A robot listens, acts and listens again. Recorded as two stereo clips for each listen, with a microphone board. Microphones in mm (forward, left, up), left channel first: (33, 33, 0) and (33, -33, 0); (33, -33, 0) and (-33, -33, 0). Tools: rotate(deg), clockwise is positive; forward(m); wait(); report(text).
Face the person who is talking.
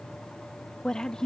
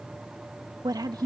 rotate(-170)
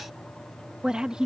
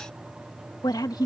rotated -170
rotate(10)
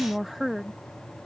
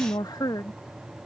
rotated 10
report("Found it: a woman speaking, straight ahead.")